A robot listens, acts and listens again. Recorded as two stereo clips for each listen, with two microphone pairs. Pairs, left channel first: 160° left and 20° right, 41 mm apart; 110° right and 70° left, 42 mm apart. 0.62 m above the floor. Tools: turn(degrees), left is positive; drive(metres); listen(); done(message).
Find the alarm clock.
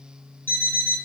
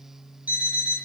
turn(degrees=120)
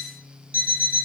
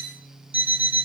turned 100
turn(degrees=20)
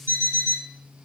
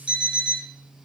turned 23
done("Facing the alarm clock, 2 to 4 m away.")